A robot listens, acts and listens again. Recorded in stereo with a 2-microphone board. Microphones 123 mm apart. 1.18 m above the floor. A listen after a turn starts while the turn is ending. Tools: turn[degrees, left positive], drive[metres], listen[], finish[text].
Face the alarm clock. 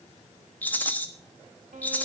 Action: listen[]
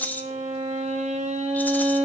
Action: listen[]
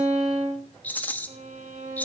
Action: finish[I can't make out an alarm clock to turn to.]